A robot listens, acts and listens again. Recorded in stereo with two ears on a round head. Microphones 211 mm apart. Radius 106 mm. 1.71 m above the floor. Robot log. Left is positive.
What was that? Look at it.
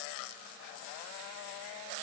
cmd idle
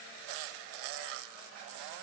cmd idle
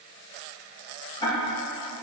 note: The ticking: about 20° left or 160° left.
cmd yaw +20
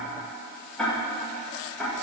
end: Found it: ticking, straight ahead, 1 to 2 m away.